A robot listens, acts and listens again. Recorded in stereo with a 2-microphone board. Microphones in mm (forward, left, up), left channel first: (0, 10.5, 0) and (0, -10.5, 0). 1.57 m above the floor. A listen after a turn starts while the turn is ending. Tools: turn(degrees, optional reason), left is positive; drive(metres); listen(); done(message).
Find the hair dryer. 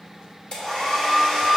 turn(degrees=50, reason="The hair dryer: about 50° left or 130° left.")
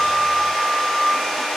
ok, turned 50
turn(degrees=65, reason="So it is at 65° left.")
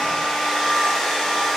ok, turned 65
turn(degrees=20, reason="The hair dryer is now 20° left.")
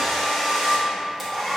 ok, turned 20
done("Found it: a hair dryer, straight ahead.")